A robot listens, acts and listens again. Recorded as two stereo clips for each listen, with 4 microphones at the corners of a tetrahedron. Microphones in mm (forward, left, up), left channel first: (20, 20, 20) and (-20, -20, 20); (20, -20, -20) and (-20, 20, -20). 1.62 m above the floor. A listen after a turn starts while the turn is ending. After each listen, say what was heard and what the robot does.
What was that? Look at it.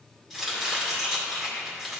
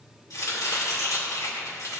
The chopping: 50° right. Turn 50° right.
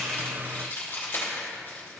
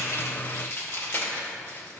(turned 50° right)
Found it: chopping, straight ahead, 2 to 4 m away.